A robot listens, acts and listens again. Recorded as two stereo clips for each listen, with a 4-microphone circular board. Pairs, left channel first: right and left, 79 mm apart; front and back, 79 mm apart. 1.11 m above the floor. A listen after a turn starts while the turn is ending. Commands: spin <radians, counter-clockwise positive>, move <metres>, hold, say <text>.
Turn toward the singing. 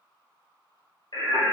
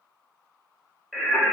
spin -1.31
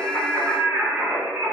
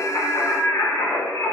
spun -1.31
spin 0.61
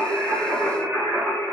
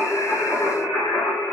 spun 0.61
spin 0.35
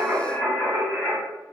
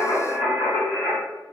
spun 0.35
spin 0.26
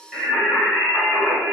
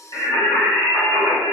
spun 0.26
spin 0.17
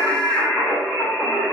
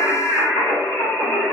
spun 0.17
say Facing the singing, 2 to 4 m away.